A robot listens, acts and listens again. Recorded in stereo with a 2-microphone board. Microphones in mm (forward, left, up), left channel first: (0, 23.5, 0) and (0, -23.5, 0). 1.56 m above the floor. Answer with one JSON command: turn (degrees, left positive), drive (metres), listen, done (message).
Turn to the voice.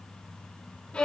{"listen": true}
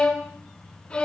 {"listen": true}
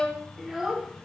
{"turn": -30}
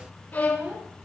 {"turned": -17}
{"turn": -30}
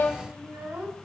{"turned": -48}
{"turn": -100}
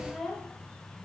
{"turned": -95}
{"done": "Found it: a child speaking, straight ahead, over 4 m away."}